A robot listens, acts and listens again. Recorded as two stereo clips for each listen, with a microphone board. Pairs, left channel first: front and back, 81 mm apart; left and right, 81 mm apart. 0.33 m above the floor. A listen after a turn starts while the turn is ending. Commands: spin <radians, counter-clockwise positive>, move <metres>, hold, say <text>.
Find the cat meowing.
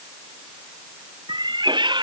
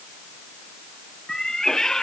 spin 3.05
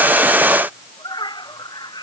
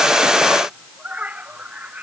spin -0.35
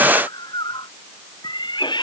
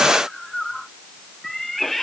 say Found it: a cat meowing, straight ahead.